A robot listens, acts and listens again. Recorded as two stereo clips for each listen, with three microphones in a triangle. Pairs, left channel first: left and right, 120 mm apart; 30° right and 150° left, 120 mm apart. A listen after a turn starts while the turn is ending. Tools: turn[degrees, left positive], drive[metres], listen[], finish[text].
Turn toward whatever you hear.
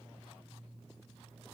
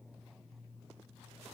Action: listen[]
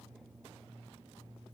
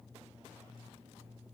Action: listen[]
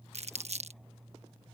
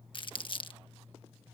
Thought: The crumpling: 75° right.
Action: turn[-75]
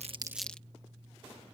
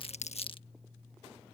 Action: listen[]
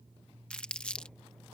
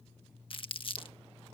Thought: The crumpling is now 10° left.
Action: turn[10]
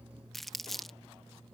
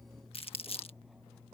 Action: finish[Facing the crumpling.]